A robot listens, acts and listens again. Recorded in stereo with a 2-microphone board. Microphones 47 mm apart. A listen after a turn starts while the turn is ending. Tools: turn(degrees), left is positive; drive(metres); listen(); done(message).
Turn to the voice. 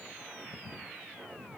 listen()
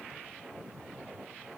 listen()
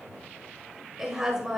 turn(degrees=-30)
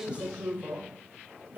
turn(degrees=-140)
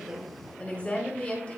turn(degrees=30)
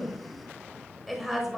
done("Facing the woman speaking, 1 to 2 m away.")